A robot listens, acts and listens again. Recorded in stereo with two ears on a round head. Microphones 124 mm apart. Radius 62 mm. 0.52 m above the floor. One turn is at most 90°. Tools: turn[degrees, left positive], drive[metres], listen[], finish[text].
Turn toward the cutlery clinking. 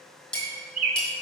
Action: turn[30]
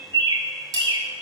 Thought: So it is at 25° right.
Action: turn[-25]
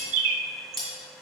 Action: finish[Facing the cutlery clinking, 2 to 4 m away.]